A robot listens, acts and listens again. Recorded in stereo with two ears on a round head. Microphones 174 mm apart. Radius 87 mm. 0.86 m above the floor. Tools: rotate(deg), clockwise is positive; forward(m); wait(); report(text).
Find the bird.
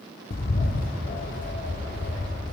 rotate(-50)
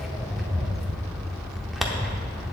report("Facing the bird, under 1 m away.")